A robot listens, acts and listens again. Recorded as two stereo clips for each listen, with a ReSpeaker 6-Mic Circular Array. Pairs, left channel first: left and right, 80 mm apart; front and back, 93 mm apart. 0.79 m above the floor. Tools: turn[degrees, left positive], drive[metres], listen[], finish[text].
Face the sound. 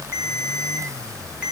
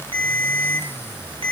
Thought: The ringtone: 165° right.
Action: turn[-165]
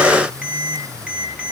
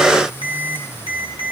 Thought: The ringtone is now 15° right.
Action: turn[-15]
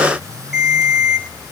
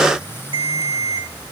Action: finish[Found it: a ringtone, straight ahead.]